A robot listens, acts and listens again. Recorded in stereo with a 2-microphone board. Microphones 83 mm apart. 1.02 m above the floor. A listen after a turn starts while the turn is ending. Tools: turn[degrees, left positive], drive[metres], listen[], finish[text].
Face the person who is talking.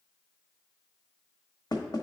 Action: listen[]
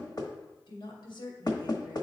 Thought: The woman speaking: about 75° left or 105° left.
Action: turn[75]
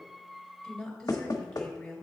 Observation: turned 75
Thought: So it is at 10° left.
Action: turn[10]
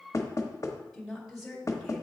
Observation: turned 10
Action: finish[Facing the woman speaking.]